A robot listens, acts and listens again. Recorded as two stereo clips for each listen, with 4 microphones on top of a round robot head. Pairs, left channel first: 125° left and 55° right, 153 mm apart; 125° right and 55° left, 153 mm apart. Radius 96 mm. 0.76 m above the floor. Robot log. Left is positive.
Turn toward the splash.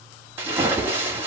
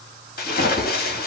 note: The splash: 130° right.
cmd yaw -130
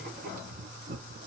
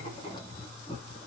end: Facing where the splash came from. I can't hear it now.